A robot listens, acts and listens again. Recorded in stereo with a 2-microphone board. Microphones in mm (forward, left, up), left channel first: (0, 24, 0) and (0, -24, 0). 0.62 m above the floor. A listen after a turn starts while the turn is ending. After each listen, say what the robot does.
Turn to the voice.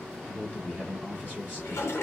Turn 35° left.
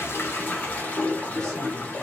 Keep listening.
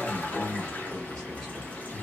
Facing the man speaking, 1 to 2 m away.